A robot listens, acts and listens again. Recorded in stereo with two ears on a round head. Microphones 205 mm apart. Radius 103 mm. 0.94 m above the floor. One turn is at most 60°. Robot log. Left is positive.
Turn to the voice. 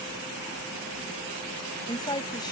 note: The woman speaking: about 20° left or 160° left.
cmd yaw +20
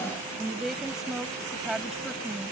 end: Found it: a woman speaking, straight ahead.